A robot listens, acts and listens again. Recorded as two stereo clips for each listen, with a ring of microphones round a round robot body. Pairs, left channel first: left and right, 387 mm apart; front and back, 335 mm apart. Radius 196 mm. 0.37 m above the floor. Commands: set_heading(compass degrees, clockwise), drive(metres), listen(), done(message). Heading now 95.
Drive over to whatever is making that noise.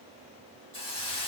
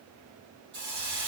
set_heading(280)
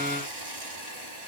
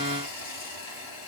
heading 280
set_heading(300)
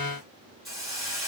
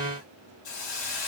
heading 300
drive(1.0)
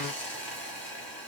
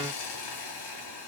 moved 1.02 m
drive(1.0)
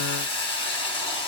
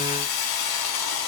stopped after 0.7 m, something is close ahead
set_heading(290)
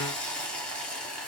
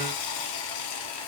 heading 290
done("Arrived at the hiss, straight ahead.")